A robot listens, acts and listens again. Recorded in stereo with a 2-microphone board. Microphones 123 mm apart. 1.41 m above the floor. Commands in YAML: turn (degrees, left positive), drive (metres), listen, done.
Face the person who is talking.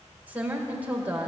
turn: -30
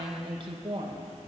turn: -135
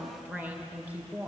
turn: -10
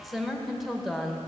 done: "Found it: a woman speaking, straight ahead, 1 to 2 m away."